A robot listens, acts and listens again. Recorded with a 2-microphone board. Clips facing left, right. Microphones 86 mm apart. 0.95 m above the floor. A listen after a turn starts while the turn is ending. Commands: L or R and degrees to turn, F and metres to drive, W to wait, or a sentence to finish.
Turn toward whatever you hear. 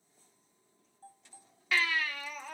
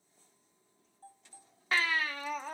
R35
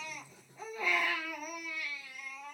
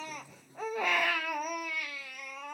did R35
R110
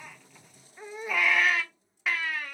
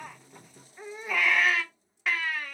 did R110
Found it: a baby crying, straight ahead.